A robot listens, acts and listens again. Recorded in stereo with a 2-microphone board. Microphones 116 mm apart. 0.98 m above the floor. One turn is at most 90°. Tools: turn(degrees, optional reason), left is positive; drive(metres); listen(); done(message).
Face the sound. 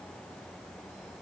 listen()
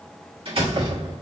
turn(degrees=-50, reason="The door slam: about 50° right or 130° right.")
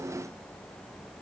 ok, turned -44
listen()
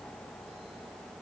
done("I heard a door slam, but can't make it out now. It was about 5° right or 85° right.")